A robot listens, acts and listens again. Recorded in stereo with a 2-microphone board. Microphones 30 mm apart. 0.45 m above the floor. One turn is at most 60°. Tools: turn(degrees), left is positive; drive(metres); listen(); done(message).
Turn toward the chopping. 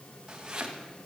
turn(degrees=-25)
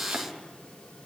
listen()
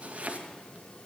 turn(degrees=-60)
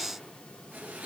turn(degrees=-60)
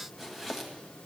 turn(degrees=-10)
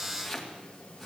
done("Found it: chopping, straight ahead.")